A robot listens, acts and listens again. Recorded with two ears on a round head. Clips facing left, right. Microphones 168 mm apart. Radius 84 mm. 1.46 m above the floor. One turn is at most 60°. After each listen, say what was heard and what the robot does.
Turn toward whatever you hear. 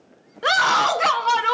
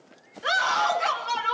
The scream: about 70° left or 110° left. Turn 60° left.
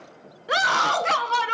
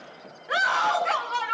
So it is at 50° left. Turn 50° left.
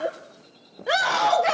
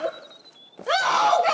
Found it: a scream, straight ahead, 1 to 2 m away.